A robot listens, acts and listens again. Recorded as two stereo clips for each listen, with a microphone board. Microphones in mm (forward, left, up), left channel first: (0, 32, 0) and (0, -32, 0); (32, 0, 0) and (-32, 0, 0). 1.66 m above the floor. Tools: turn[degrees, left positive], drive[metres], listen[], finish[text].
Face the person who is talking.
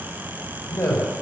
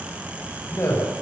Thought: The man speaking: 50° left.
Action: turn[50]
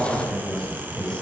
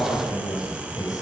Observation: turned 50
Thought: The man speaking is now 10° left.
Action: turn[10]
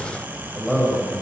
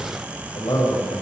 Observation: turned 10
Action: finish[Found it: a man speaking, straight ahead, over 4 m away.]